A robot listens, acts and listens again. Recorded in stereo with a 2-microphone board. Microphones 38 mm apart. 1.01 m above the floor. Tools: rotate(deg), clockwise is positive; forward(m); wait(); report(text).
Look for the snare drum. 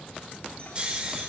wait()
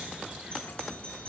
wait()
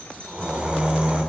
report("I can't make out a snare drum to turn to.")